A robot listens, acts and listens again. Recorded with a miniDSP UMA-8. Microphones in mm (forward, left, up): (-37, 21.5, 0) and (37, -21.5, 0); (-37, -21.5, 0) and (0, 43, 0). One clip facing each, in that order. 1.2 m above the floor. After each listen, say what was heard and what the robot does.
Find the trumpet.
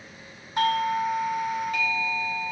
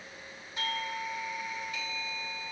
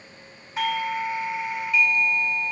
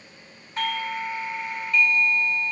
Keep listening.
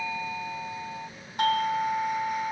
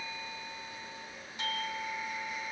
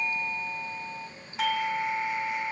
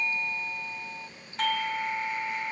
Keep listening.
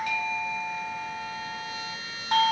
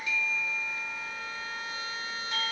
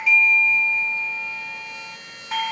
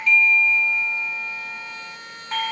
The trumpet: 20° left. Turn 20° left.
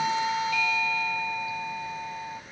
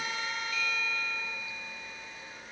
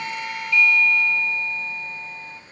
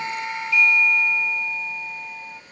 Keep listening.
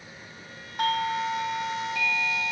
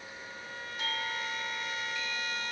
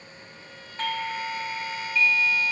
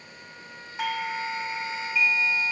Keep listening.
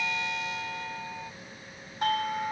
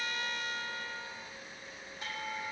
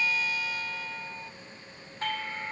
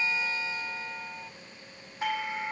Facing where the trumpet came from. I can't hear it now.